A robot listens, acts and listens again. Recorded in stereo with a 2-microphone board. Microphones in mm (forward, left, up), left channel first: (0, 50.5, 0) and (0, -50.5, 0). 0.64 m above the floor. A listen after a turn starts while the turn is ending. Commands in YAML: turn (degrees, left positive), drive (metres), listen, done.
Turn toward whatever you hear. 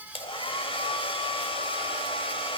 turn: 60
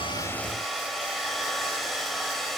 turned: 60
done: "Found it: a hair dryer, straight ahead."